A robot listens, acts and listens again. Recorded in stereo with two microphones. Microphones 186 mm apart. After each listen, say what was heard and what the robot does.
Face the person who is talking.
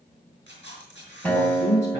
The man speaking: about 75° left or 105° left. Turn 75° left.
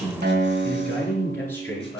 So it is at 15° left. Turn 15° left.
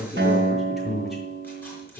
Facing the man speaking.